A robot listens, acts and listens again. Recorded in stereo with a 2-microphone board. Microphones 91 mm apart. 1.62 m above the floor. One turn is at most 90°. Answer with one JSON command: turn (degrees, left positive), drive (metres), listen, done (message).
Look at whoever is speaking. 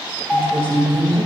{"turn": 70}
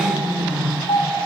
{"turn": 10}
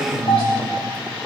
{"listen": true}
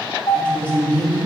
{"turn": 20}
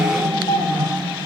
{"done": "Facing the woman speaking, 2 to 4 m away."}